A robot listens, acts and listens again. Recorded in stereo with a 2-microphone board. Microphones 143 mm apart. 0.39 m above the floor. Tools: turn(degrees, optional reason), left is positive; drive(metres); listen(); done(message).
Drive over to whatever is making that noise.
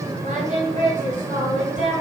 turn(degrees=-65, reason="The singing: about 65° right or 115° right.")
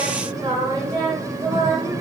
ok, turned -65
turn(degrees=-35, reason="So it is at 35° right.")
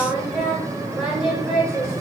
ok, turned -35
drive(metres=1.0)
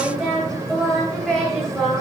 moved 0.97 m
drive(metres=1.0)
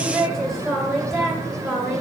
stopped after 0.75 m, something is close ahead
done("Arrived at the singing, straight ahead.")